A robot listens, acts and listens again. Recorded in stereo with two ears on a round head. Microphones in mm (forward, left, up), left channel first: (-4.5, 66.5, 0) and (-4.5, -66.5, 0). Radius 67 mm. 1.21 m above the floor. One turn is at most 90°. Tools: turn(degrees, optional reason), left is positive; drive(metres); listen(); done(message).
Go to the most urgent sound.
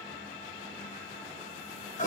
listen()
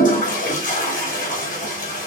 listen()
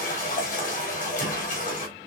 done("I can't make out anything urgent to turn to.")